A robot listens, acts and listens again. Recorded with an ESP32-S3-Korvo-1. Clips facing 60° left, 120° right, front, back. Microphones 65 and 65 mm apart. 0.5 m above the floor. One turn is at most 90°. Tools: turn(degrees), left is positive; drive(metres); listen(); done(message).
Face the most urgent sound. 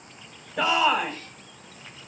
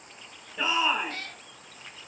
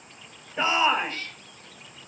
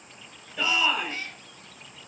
turn(degrees=60)
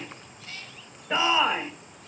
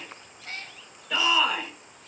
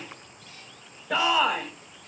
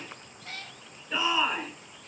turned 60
done("Found it: a shout, straight ahead, 2 to 4 m away.")